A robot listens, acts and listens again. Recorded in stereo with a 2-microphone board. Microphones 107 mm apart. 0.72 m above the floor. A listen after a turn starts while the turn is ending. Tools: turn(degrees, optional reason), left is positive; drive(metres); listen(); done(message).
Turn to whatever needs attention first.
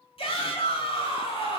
turn(degrees=60, reason="The shout: about 60° left or 120° left.")
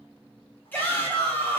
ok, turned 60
turn(degrees=20, reason="So it is at 20° left.")
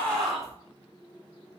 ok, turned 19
done("Facing the shout.")